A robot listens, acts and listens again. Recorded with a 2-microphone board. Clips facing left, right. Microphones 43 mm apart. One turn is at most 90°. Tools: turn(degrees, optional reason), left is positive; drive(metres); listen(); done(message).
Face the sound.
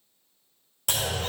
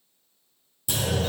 turn(degrees=75, reason="The clunk: about 75° left or 105° left.")
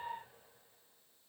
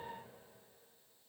listen()
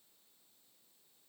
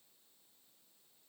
done("I heard a clunk, but can't make it out now. It was about straight ahead or 30° left.")